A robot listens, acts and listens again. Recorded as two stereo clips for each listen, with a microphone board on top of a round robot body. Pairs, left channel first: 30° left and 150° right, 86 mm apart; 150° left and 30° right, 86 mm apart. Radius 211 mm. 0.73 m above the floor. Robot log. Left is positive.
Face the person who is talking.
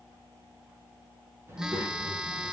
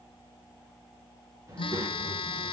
note: The child speaking: 80° right.
cmd yaw -80
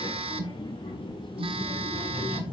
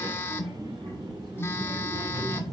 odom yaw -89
note: The child speaking is now 20° left.
cmd yaw +20
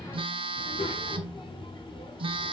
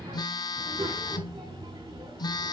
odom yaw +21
end: Facing the child speaking.